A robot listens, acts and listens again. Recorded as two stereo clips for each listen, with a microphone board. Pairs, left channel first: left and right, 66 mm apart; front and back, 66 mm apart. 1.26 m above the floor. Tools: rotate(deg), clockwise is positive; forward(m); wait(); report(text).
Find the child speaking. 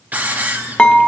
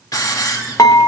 wait()
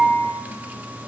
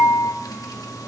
wait()
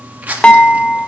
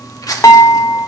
report("I can't make out a child speaking to turn to.")